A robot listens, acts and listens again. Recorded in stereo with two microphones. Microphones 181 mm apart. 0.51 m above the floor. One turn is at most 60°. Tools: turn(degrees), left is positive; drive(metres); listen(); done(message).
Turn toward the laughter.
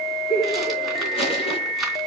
turn(degrees=55)
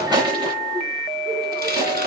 listen()
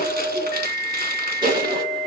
listen()
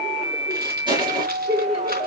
turn(degrees=-30)
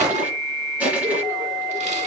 listen()
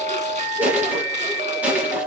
listen()
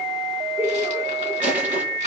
turn(degrees=-15)
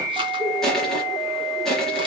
listen()
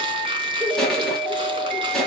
listen()
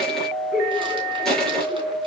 done("Found it: laughter, straight ahead.")